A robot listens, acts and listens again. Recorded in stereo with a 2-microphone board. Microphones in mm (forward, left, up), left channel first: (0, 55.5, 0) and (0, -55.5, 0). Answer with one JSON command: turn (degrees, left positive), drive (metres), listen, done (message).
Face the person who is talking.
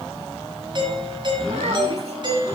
{"turn": -90}
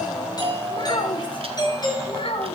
{"turn": 60}
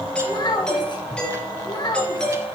{"turn": 40}
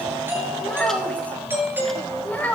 {"turn": 15}
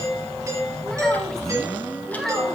{"done": "Facing the child speaking, 1 to 2 m away."}